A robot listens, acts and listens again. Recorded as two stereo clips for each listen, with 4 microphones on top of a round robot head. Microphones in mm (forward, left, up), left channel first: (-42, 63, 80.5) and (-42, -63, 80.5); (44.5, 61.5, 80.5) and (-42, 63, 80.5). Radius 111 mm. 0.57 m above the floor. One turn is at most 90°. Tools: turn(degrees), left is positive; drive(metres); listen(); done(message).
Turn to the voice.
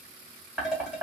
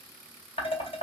listen()
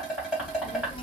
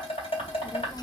turn(degrees=40)
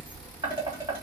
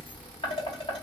turn(degrees=15)
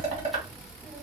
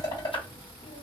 done("Found it: a child speaking, straight ahead, under 1 m away.")